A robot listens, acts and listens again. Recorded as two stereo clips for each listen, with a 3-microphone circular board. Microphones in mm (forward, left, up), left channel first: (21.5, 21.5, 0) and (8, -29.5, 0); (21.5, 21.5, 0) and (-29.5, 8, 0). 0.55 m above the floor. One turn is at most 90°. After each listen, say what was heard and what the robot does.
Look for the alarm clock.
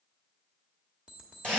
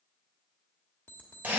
The alarm clock: 35° right. Turn 35° right.
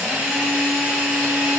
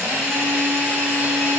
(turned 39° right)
Keep listening.
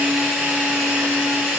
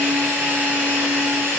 Keep listening.
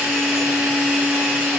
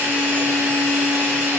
Facing where the alarm clock came from. I can't hear it now.